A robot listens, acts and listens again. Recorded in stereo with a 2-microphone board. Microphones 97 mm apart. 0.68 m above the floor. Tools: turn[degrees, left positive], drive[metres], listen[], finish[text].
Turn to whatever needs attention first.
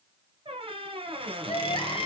Thought: The crying: about 65° left or 115° left.
Action: turn[65]
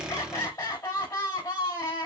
Thought: So it is at 45° left.
Action: turn[45]
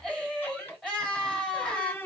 Thought: The crying is now 10° left.
Action: turn[10]
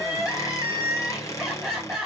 Action: finish[Facing the crying, 2 to 4 m away.]